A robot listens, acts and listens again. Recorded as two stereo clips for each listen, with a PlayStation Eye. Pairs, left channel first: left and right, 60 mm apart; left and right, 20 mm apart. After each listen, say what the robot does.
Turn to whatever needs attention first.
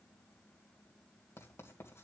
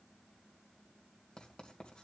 Keep listening.
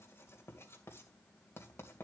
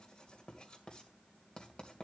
Keep listening.
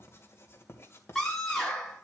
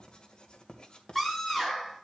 Turn 30° left.
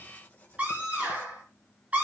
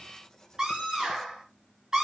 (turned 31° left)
Turn 25° right.
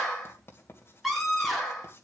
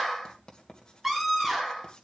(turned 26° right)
Facing the scream.